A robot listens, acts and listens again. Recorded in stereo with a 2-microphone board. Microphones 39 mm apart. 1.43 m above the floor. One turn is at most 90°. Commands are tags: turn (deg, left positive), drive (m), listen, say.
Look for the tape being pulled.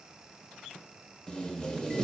<turn deg="20"/>
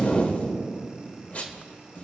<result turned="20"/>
<turn deg="90"/>
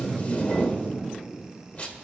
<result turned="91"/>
<turn deg="45"/>
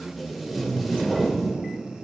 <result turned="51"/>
<say>Facing the tape being pulled.</say>